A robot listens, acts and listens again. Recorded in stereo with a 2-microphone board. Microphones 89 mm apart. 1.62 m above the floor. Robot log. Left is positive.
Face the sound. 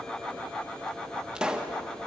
cmd yaw -30
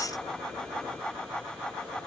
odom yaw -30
cmd idle
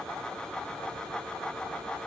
end: I heard a pop, but can't make it out now. It was about 20° left or 140° right.